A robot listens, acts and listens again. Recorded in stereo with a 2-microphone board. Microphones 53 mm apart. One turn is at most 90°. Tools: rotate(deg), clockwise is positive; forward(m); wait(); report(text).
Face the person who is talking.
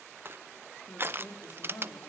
rotate(-65)
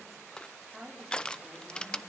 report("Found it: a woman speaking, straight ahead, over 4 m away.")